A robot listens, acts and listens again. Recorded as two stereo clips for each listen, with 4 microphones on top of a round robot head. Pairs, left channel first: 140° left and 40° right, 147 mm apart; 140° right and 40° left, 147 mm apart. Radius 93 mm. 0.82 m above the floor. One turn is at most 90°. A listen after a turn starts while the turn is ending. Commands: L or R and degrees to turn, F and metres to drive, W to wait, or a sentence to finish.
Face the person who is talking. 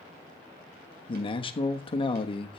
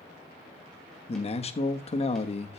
R90
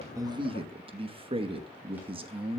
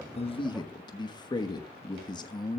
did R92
R85
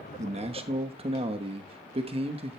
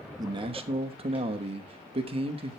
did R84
Facing the man speaking, 1 to 2 m away.